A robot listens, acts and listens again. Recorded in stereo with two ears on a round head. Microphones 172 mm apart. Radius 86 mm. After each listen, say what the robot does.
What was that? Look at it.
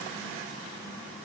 Keep listening.
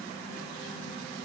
Keep listening.
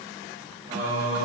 Turn 40° right.
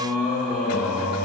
Found it: singing, straight ahead.